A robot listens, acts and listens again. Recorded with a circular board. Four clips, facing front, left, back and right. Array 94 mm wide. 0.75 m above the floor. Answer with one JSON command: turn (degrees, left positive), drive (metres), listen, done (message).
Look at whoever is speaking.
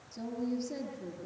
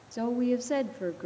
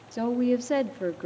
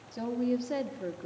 {"turn": 160}
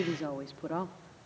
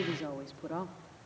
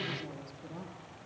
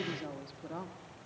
{"turn": 20}
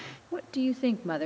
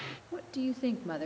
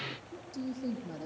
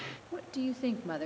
{"done": "Found it: a woman speaking, straight ahead, 1 to 2 m away."}